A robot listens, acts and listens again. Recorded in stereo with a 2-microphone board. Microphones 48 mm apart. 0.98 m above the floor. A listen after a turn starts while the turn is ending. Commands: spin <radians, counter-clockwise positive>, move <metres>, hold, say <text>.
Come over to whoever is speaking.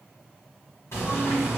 hold
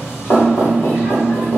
hold
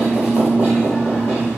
say I can't make out anyone speaking to turn to.